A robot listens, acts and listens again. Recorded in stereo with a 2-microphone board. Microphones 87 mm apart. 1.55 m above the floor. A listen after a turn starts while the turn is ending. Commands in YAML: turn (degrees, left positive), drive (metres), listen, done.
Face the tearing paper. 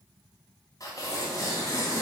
turn: 40
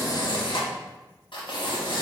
turn: 100
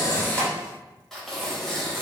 done: "Found it: tearing paper, straight ahead, under 1 m away."